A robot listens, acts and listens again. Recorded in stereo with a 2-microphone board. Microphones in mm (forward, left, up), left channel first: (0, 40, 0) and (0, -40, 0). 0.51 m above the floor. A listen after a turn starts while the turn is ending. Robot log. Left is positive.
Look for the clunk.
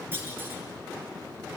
note: The clunk: about 30° right or 150° right.
cmd yaw -30
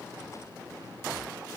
cmd idle
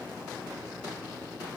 end: I heard a clunk, but can't make it out now. It was about straight ahead or 120° right.